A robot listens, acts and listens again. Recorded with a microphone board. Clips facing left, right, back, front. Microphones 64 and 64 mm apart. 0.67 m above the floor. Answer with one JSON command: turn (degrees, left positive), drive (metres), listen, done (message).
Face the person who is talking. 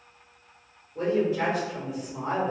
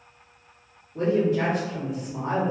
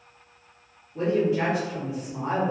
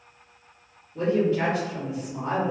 {"turn": -105}
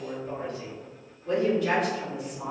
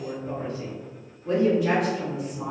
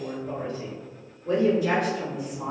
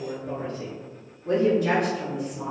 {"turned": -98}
{"turn": -10}
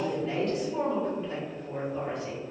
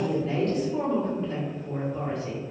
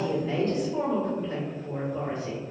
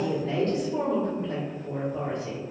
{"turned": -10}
{"done": "Facing the woman speaking."}